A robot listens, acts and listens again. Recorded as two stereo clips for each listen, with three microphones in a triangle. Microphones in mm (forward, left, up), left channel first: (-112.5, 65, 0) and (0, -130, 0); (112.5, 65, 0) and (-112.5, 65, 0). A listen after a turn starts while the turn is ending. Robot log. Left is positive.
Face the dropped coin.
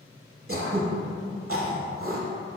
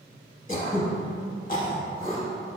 cmd idle
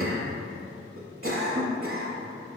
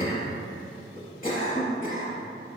cmd idle
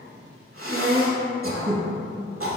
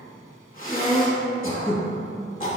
end: I can't make out a dropped coin to turn to.